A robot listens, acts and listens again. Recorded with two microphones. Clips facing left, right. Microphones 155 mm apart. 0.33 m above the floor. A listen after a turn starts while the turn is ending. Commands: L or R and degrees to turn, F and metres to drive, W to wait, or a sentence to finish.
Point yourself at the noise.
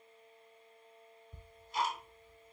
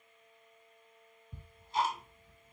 R30
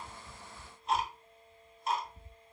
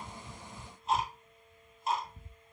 Found it: ticking, straight ahead, 1 to 2 m away.